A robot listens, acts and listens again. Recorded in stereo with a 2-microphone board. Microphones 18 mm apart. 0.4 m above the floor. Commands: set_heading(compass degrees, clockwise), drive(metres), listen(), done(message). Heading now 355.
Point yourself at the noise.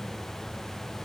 listen()
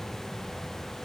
listen()
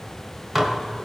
set_heading(15)
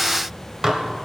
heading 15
set_heading(160)
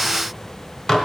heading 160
set_heading(125)
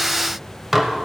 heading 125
set_heading(135)
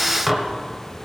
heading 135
done("Facing the dishes clattering.")